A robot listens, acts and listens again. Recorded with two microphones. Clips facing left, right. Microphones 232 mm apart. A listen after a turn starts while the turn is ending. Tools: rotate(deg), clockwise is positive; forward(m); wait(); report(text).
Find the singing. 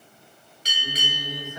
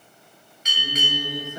rotate(35)
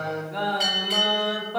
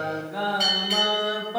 report("Facing the singing.")